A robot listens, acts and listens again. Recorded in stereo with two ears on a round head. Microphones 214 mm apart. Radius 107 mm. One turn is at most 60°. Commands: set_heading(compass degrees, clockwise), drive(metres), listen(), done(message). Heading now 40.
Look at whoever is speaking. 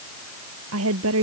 set_heading(100)
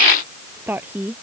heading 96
set_heading(106)
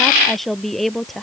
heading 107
done("Found it: a woman speaking, straight ahead.")